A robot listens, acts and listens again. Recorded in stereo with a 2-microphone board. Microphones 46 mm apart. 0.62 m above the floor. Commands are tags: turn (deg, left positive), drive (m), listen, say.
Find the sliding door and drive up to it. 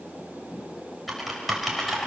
<listen/>
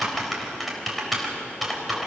<listen/>
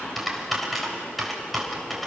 <say>I can't make out a sliding door to turn to.</say>